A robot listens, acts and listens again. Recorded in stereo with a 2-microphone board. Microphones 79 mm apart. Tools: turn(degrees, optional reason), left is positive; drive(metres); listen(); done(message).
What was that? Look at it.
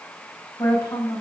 turn(degrees=40, reason="The woman speaking: about 40° left or 140° left.")
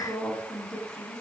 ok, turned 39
done("Facing the woman speaking.")